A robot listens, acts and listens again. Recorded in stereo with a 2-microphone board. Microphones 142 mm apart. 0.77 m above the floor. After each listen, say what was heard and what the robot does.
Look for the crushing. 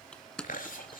Turn 30° left.
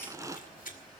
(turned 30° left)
So it is at 25° right. Turn 25° right.
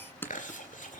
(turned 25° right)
The crushing is now 15° left. Turn 15° left.
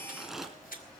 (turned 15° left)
Facing the crushing.